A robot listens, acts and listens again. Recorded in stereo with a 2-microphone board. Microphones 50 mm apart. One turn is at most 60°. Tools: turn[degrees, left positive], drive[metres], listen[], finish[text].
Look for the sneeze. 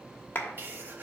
Thought: The sneeze: about 45° right or 135° right.
Action: turn[-45]
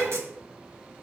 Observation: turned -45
Thought: So it is at 80° right.
Action: turn[-60]
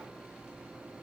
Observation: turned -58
Thought: Nothing new. It was at 25° right.
Action: turn[-25]
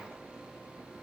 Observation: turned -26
Action: finish[I heard a sneeze from this way, but can't make it out now.]